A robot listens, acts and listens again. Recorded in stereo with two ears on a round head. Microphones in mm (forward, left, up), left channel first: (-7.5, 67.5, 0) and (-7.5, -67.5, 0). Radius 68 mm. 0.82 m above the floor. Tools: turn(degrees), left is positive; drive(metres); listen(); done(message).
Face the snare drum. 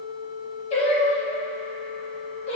listen()
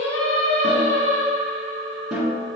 turn(degrees=-30)
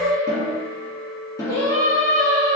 turn(degrees=25)
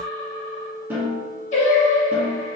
turn(degrees=-15)
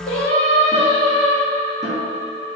listen()
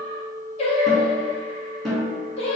done("Found it: a snare drum, straight ahead, 1 to 2 m away.")